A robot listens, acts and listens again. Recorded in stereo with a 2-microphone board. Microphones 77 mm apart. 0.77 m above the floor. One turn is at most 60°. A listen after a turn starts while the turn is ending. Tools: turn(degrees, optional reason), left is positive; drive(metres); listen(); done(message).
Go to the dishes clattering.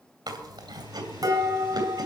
turn(degrees=-55, reason="The dishes clattering: about 55° right or 125° right.")
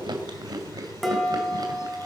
drive(metres=1.0)
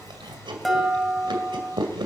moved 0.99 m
drive(metres=1.0)
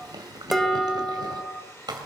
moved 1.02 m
drive(metres=1.0)
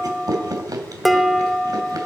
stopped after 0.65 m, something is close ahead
done("I am next to the dishes clattering.")